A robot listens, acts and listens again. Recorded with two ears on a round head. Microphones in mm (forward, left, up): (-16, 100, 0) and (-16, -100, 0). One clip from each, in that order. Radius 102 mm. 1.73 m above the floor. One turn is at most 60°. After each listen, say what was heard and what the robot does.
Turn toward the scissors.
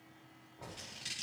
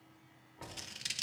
The scissors: about 35° right or 145° right. Turn 35° right.
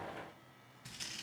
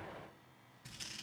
Facing the scissors, 1 to 2 m away.